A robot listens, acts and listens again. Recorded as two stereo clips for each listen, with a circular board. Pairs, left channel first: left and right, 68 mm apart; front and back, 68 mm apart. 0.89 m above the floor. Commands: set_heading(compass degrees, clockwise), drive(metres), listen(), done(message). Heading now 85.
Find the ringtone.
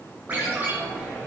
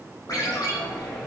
set_heading(110)
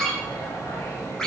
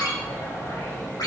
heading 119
set_heading(109)
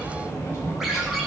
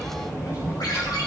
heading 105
listen()
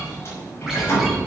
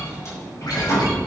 listen()
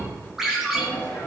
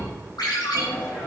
done("Facing the ringtone, over 4 m away.")